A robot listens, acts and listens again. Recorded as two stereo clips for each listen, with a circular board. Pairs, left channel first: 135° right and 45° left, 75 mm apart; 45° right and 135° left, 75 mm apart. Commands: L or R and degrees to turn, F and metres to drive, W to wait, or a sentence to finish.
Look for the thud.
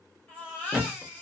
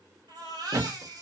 L125
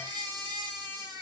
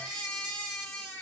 Facing where the thud came from. I can't hear it now.